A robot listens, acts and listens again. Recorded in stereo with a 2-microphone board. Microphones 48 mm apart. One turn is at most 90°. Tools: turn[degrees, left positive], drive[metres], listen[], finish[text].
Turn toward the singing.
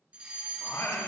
Action: turn[90]
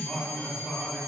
Thought: So it is at 10° left.
Action: turn[10]
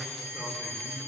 Action: finish[Facing the singing.]